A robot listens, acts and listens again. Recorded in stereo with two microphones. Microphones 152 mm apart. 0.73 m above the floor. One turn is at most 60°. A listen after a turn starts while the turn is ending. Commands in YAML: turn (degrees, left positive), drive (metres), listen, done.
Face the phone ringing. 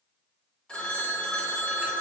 turn: 30
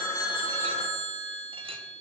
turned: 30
turn: 60
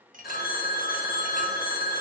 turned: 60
turn: 60
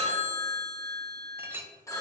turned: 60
turn: 20
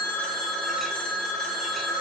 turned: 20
done: "Found it: a phone ringing, straight ahead."